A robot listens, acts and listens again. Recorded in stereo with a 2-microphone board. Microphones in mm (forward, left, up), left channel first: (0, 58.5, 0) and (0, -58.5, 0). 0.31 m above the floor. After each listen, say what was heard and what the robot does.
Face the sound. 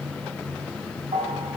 The bell: about 65° right or 115° right. Turn 65° right.
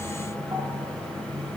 Keep listening.
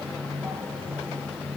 Keep listening.
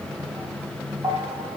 So it is at 40° right. Turn 40° right.
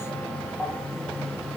The bell is now 10° left. Turn 10° left.
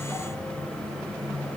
Keep listening.
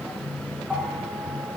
Facing the bell, 2 to 4 m away.